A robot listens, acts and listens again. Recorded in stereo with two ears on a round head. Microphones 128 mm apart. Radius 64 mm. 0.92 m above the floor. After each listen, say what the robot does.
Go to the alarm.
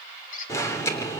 Turn 20° left.
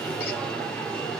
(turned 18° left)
Drive 1.0 m forward.
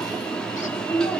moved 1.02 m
Drive 1.0 m forward.
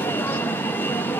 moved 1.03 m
Turn 15° left.
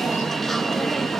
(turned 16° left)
Drive 1.0 m forward.
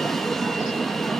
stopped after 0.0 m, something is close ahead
Arrived at the alarm, straight ahead.